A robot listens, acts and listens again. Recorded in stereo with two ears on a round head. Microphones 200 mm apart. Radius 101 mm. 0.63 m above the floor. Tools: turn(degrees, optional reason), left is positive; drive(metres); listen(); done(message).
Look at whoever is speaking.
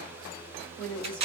turn(degrees=30)
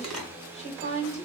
turn(degrees=145, reason="So it is at 145° left.")
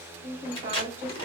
turn(degrees=-10, reason="The woman speaking is now 10° right.")
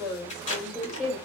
done("Facing the woman speaking, 2 to 4 m away.")